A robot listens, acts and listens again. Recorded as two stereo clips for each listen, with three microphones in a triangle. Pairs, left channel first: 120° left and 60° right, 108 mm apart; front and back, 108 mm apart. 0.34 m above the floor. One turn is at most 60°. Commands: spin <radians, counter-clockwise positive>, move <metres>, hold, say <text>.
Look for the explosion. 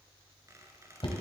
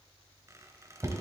hold
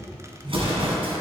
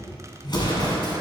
spin -0.70
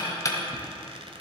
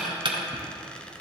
say Facing where the explosion came from. I can't hear it now.